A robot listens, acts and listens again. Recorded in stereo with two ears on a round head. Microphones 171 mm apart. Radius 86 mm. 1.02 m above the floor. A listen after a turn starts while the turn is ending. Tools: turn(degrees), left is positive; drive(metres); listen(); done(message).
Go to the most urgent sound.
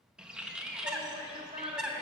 turn(degrees=-25)
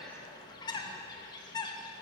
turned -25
listen()
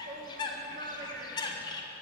turn(degrees=-125)
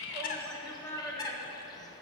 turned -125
turn(degrees=10)
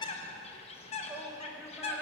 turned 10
drive(metres=1.0)
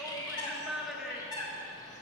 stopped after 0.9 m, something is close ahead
done("I am next to the shout.")